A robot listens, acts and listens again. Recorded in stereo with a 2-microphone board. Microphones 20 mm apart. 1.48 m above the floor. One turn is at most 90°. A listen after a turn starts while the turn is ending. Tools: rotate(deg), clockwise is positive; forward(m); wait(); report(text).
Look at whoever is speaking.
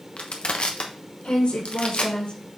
rotate(-70)
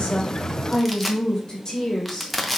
rotate(-40)
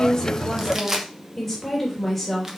rotate(-15)
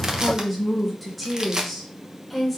report("Found it: a woman speaking, straight ahead.")